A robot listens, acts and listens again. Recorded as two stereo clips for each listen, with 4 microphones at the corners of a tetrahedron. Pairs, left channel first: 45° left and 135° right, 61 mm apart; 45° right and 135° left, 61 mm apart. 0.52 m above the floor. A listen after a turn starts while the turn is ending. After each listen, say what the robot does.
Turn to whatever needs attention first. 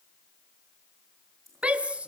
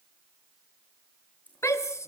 Turn 70° right.
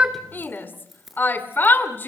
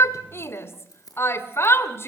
Turn 10° right.
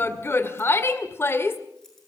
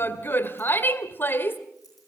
Found it: a shout, straight ahead.